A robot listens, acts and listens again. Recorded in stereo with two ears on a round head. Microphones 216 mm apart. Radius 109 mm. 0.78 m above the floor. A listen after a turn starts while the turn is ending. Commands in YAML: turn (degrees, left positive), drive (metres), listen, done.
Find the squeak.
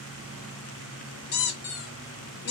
turn: 45
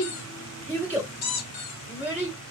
turn: 90
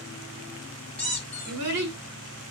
done: "Found it: a squeak, straight ahead, under 1 m away."